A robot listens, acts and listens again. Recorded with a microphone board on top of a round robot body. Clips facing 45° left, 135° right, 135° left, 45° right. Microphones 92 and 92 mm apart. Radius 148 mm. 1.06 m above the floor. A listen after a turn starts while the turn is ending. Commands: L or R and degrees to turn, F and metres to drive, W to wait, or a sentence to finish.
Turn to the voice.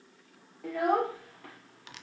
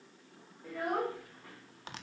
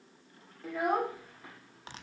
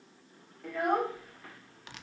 L55
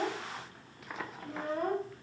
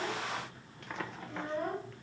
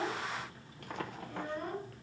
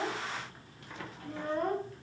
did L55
Found it: a child speaking, straight ahead.